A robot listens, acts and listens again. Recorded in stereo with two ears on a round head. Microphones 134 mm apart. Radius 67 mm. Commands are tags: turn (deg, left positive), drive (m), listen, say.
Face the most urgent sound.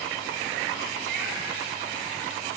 <listen/>
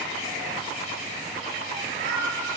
<listen/>
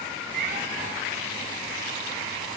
<say>I can't make out anything urgent, only a cat meowing.</say>